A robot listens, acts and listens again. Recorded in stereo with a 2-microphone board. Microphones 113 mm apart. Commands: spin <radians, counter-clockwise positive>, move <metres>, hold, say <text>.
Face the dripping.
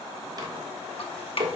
spin 0.96
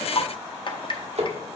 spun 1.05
spin 0.96
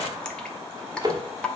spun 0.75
spin 0.17
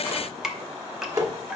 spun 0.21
say Found it: dripping, straight ahead, under 1 m away.